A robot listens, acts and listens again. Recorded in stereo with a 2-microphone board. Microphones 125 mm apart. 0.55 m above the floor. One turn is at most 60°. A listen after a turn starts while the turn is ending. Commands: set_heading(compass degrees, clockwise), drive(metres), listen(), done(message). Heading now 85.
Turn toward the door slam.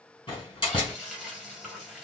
set_heading(45)
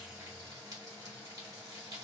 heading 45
listen()
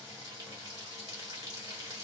done("I heard a door slam, but can't make it out now. It was about straight ahead or 100° left.")